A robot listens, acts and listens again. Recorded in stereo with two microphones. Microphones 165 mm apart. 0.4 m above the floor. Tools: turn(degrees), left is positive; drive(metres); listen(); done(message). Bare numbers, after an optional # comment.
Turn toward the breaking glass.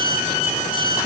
listen()
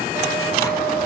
listen()
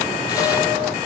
done("I can't make out breaking glass.")